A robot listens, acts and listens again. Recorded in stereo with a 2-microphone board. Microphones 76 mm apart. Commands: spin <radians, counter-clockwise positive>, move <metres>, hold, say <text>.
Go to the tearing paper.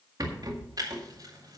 spin -1.05
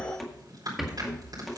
spin -1.05
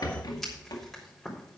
move 1.0
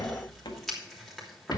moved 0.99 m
move 1.0
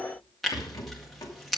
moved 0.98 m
move 1.0
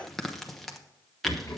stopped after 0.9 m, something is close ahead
say Arrived at the tearing paper, straight ahead.